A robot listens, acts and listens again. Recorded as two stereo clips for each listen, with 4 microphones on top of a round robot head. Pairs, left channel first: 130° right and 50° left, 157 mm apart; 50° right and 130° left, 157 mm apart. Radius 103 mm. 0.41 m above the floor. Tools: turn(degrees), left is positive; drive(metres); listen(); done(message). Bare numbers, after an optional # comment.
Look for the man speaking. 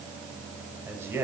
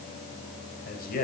# The man speaking: 25° right.
turn(-25)
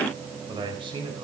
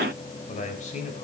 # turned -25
done("Found it: a man speaking, straight ahead, over 4 m away.")